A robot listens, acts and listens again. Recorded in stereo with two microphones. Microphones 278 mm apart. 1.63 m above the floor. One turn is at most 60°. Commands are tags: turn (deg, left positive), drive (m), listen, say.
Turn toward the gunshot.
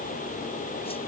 <listen/>
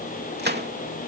<turn deg="-35"/>
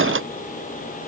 <listen/>
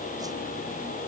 <say>I heard a gunshot, but can't make it out now. It was about straight ahead or 110° right.</say>